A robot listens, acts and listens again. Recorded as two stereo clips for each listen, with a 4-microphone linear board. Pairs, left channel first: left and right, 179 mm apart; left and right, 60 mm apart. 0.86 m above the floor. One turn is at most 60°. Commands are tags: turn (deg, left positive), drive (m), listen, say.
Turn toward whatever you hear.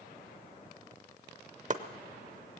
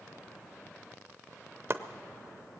<turn deg="-45"/>
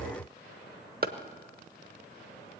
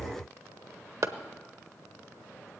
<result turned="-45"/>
<turn deg="-60"/>
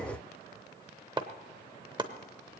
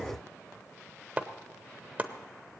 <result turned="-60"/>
<turn deg="-30"/>
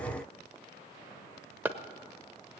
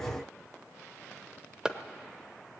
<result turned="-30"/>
<turn deg="-15"/>
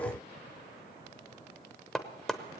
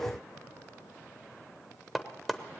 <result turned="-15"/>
<say>Found it: chopping, straight ahead, under 1 m away.</say>